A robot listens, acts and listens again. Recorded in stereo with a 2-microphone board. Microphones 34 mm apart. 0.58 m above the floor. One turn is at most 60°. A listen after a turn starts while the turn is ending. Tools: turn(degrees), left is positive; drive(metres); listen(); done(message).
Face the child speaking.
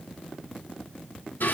listen()
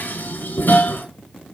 listen()
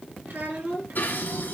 turn(degrees=-60)
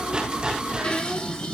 turn(degrees=-30)
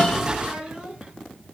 turn(degrees=-25)
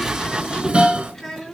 done("Found it: a child speaking, straight ahead.")